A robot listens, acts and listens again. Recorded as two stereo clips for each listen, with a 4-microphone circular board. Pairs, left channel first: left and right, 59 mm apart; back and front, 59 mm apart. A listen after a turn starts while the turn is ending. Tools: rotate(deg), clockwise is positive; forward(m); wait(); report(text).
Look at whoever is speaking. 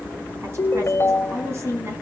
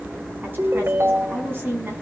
rotate(50)
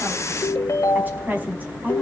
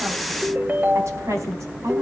rotate(30)
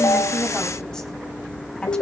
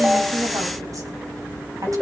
rotate(-15)
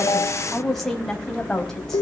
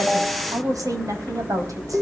report("Facing the woman speaking, over 4 m away.")